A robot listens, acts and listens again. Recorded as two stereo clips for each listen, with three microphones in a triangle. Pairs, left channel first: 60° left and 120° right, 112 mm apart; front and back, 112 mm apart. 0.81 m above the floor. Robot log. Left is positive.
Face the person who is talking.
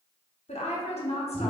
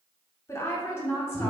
note: The woman speaking: 65° left.
cmd yaw +65
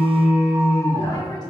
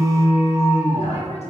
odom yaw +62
cmd idle
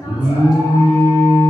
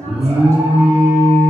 cmd idle
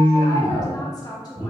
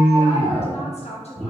end: Found it: a woman speaking, straight ahead, under 1 m away.